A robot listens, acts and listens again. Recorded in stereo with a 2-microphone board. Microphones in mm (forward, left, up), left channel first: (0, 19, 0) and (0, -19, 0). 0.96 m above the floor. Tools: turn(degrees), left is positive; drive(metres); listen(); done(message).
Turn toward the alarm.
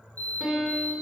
turn(degrees=60)
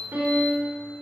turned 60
listen()
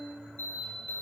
turn(degrees=60)
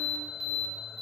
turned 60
done("Facing the alarm.")